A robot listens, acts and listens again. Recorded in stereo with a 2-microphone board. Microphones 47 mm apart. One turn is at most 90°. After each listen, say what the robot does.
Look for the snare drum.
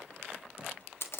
Keep listening.
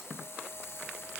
Keep listening.
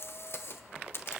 I can't make out a snare drum to turn to.